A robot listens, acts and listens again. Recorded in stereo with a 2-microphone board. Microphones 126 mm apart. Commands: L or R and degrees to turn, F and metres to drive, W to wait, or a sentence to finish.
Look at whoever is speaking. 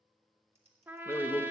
L20
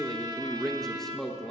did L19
Found it: a man speaking, straight ahead, under 1 m away.